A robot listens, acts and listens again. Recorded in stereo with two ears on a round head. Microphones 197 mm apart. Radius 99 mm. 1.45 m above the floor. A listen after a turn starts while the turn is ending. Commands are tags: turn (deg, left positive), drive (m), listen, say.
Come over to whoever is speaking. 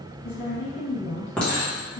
<turn deg="55"/>
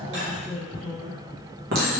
<drive m="1.0"/>
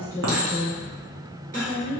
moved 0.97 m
<turn deg="10"/>
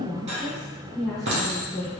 <drive m="1.0"/>
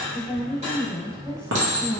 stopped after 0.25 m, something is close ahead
<say>Arrived at the woman speaking, straight ahead.</say>